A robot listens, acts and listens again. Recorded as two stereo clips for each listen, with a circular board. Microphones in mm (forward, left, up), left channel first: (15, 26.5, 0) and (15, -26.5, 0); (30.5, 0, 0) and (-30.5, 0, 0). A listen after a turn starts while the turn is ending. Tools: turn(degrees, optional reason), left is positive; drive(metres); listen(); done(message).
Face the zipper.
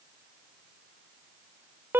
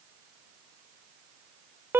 listen()
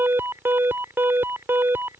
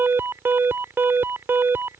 listen()
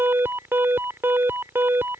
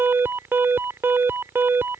done("I can't make out a zipper, only an alarm.")